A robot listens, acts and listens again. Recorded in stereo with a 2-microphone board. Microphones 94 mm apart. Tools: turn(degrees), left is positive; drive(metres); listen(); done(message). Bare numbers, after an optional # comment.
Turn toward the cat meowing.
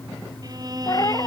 # The cat meowing: about 40° left or 140° left.
turn(40)
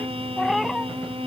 done("Facing the cat meowing.")